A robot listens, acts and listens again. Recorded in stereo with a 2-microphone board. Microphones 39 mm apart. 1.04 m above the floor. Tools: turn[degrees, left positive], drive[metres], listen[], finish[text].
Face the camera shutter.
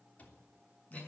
Action: listen[]
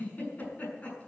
Action: listen[]
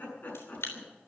Action: turn[90]
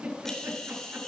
Action: finish[Found it: a camera shutter, straight ahead.]